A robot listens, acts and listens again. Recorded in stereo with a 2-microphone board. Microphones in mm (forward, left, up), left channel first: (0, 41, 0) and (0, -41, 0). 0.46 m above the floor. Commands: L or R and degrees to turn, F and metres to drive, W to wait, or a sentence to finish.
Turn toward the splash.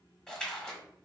L30
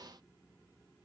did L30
W
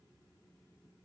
I heard a splash, but can't make it out now. It was about 20° right or 140° left.